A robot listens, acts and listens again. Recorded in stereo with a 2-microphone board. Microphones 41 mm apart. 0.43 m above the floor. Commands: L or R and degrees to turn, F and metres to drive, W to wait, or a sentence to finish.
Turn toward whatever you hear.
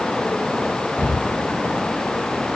L40
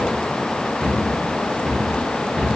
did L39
Facing the cupboard door, 1 to 2 m away.